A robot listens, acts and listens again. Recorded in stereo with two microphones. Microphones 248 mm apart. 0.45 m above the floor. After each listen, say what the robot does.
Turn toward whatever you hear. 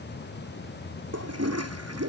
Turn 90° right.
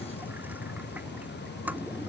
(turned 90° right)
Facing the toilet flushing.